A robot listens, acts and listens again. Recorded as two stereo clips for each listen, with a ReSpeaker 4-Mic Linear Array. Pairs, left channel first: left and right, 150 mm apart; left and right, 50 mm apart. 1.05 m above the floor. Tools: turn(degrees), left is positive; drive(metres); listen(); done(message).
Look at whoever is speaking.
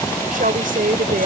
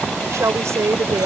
turn(degrees=-70)
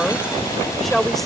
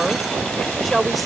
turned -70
done("Facing the woman speaking.")